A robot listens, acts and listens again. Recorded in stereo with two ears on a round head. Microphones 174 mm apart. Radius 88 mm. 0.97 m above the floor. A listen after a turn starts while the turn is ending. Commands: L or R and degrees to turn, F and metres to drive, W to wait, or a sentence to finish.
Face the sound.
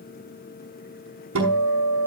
R90
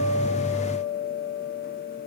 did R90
Found it: a guitar, straight ahead, over 4 m away.